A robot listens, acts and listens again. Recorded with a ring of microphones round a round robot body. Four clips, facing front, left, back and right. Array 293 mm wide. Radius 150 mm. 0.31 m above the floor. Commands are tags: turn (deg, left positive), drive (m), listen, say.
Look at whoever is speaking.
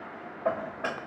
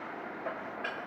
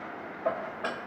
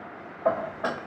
<listen/>
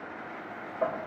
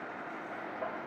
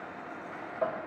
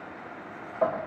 <listen/>
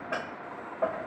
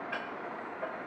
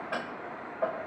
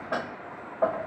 <say>I can't make out anyone speaking to turn to.</say>